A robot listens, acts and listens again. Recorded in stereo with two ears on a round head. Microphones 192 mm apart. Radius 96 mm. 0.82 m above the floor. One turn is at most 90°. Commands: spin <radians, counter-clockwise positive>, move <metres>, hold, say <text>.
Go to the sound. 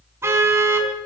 spin -0.52
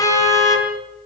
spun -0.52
spin 0.26
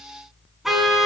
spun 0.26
move 1.0
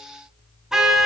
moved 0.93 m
move 1.0
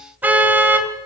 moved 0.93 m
spin -0.17
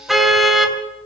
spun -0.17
move 1.0
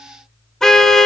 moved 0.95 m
move 1.0
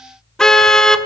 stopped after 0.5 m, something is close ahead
say Arrived at the car horn, straight ahead.